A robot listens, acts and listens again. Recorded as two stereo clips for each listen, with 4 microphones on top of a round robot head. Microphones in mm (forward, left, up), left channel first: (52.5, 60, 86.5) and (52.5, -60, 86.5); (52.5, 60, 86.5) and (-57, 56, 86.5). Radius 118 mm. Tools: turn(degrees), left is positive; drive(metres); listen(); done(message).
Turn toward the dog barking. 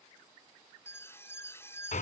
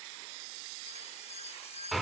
listen()
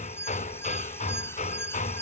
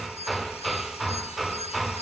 listen()
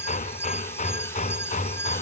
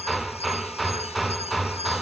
done("I can't make out a dog barking, only hammering and an alarm.")